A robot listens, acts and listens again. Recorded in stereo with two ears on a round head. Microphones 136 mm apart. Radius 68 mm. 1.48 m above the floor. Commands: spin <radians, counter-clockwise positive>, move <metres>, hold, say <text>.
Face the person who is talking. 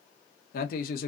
spin 1.13
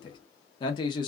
spin 0.61
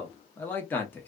spin 0.26
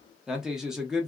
say Facing the man speaking, under 1 m away.